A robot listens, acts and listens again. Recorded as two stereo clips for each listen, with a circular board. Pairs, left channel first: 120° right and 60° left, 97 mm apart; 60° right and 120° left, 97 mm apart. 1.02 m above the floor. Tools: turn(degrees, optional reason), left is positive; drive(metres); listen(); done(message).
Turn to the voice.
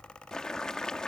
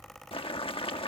listen()
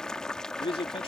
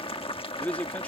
turn(degrees=-135, reason="The man speaking: 135° right.")
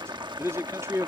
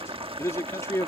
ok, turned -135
done("Found it: a man speaking, straight ahead.")